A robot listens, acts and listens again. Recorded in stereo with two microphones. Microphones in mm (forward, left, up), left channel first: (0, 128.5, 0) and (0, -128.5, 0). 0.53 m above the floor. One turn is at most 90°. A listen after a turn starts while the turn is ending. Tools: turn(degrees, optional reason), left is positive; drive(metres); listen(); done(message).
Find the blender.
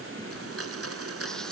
turn(degrees=-65, reason="The blender: about 65° right or 115° right.")
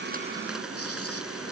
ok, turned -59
listen()
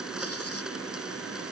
done("Found it: a blender, straight ahead.")